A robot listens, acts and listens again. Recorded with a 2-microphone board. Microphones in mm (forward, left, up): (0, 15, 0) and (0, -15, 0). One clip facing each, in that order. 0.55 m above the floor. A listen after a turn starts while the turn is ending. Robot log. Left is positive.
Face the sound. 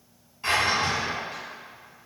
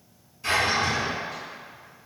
note: The drawer: about 50° left or 130° left.
cmd yaw +50
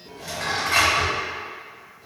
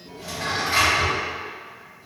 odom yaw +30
note: So it is at 95° left.
cmd yaw +95
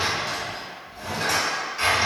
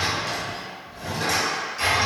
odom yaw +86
note: The drawer is now 10° left.
cmd yaw +10
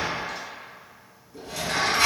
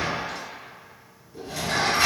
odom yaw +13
end: Facing the drawer.